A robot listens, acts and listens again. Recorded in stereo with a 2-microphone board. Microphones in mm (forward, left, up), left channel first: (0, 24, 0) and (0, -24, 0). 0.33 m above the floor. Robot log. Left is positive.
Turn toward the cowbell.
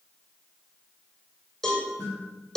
cmd yaw +30
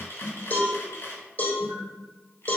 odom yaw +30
note: So it is at 145° left.
cmd yaw +145
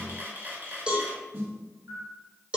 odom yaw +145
note: The cowbell is now 20° right.
cmd yaw -20
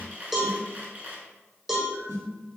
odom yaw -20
end: Facing the cowbell, 2 to 4 m away.